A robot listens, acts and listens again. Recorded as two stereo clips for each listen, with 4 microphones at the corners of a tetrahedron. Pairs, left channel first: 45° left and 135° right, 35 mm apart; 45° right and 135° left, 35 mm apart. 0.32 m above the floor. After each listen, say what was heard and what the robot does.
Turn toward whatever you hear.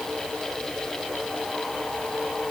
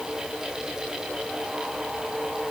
Keep listening.
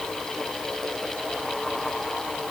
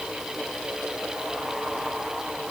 Keep listening.
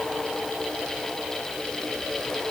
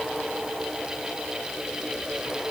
I can't make out anything.